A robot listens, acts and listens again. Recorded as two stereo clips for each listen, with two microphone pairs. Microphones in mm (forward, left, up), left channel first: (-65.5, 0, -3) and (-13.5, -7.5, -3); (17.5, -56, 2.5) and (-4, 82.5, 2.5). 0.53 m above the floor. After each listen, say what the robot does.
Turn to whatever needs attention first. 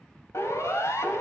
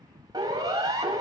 Turn 160° left.
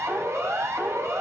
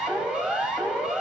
Turn 15° left.
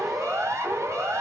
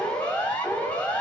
Facing the siren.